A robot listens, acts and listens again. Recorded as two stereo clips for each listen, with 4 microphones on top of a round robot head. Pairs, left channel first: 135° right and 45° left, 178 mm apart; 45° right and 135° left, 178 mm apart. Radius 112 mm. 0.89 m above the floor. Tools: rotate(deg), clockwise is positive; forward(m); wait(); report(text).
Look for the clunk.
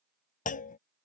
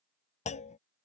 rotate(95)
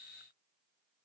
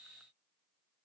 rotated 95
report("Facing where the clunk came from. I can't hear it now.")